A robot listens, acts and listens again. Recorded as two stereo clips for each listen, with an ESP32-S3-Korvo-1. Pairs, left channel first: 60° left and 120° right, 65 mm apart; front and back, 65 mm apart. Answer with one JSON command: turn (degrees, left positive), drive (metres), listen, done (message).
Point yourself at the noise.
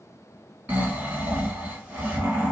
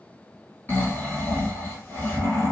{"turn": -55}
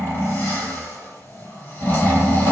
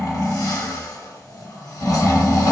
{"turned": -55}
{"done": "Facing the snoring, 1 to 2 m away."}